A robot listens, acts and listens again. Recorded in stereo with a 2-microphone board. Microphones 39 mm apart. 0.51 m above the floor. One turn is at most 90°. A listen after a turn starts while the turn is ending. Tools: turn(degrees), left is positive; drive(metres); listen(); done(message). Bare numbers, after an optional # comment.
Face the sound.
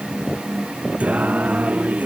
# The singing: about 45° right or 135° right.
turn(-45)
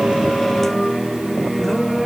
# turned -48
done("Facing the singing.")